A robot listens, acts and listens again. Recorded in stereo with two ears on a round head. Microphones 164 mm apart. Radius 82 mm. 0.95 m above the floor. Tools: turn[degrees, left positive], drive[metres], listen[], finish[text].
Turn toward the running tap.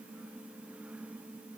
Action: listen[]
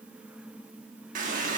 Thought: The running tap: about 50° right or 130° right.
Action: turn[-50]
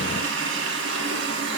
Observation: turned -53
Thought: So it is at 80° right.
Action: turn[-80]
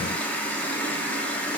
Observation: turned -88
Thought: The running tap is now 10° left.
Action: turn[10]
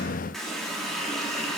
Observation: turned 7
Action: finish[Found it: a running tap, straight ahead, 1 to 2 m away.]